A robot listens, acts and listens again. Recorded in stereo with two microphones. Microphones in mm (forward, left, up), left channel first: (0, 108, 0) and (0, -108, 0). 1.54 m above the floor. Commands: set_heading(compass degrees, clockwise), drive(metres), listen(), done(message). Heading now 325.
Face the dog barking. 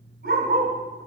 set_heading(15)
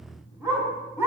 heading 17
set_heading(27)
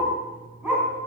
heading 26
done("Found it: a dog barking, straight ahead.")